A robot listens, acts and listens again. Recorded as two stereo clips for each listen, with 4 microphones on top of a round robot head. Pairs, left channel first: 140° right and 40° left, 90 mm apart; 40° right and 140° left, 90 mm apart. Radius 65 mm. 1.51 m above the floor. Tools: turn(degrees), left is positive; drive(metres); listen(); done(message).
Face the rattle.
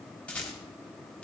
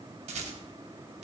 turn(degrees=145)
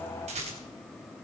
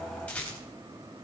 turn(degrees=35)
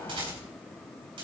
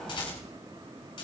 done("Found it: a rattle, straight ahead.")